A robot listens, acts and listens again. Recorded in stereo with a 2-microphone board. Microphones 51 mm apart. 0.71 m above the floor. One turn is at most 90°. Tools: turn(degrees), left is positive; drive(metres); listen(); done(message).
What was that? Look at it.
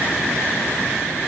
listen()
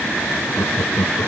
turn(degrees=70)
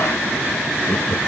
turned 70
turn(degrees=35)
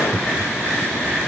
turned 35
done("Facing the laughter.")